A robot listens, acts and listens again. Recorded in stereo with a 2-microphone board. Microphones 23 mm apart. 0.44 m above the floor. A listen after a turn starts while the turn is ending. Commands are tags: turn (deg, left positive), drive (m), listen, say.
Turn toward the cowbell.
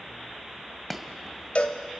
<turn deg="65"/>
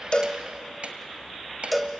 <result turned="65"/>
<say>Found it: a cowbell, straight ahead.</say>